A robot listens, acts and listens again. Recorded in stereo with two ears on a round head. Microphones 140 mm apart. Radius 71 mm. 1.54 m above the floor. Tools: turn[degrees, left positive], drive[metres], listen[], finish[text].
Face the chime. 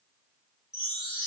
Thought: The chime: about 20° left or 160° left.
Action: turn[20]
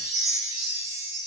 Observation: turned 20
Action: finish[Facing the chime.]